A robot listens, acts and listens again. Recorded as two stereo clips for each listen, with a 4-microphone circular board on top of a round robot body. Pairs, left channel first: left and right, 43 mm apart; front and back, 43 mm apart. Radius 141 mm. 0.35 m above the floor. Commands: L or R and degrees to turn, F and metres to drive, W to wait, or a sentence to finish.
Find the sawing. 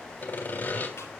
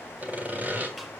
L130
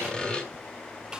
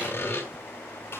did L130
L20
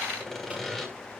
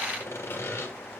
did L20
Found it: sawing, straight ahead.